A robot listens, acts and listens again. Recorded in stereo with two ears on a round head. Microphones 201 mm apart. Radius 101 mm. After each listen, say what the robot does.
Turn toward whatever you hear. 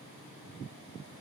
Keep listening.
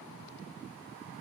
Keep listening.
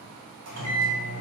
Turn 75° right.
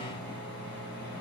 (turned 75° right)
Turn 10° right.
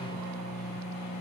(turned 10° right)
Found it: a microwave, straight ahead.